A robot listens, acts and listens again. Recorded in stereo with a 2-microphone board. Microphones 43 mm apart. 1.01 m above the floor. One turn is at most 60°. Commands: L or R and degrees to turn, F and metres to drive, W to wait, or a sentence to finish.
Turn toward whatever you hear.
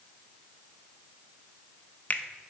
L35
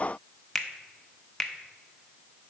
Facing the finger snap, under 1 m away.